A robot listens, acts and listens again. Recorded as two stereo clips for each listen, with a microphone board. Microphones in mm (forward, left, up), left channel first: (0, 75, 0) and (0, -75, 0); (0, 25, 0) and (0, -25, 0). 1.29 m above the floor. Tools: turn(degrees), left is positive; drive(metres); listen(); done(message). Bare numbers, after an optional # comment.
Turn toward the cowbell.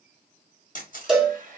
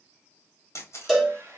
turn(-30)
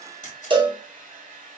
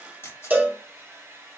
# So it is at 145° right.
turn(-145)
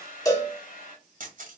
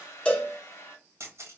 # The cowbell is now 25° left.
turn(25)
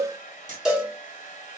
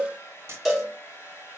done("Facing the cowbell.")